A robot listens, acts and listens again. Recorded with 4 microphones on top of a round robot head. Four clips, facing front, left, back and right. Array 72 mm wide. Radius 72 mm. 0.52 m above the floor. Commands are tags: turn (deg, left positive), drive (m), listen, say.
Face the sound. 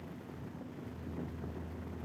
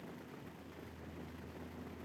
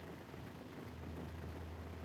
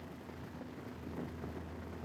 <listen/>
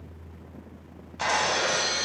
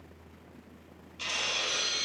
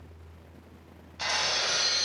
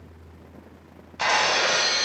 <turn deg="-65"/>
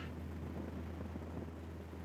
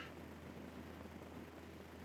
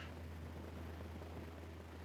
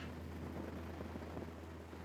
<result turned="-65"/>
<say>Facing where the breaking glass came from. I can't hear it now.</say>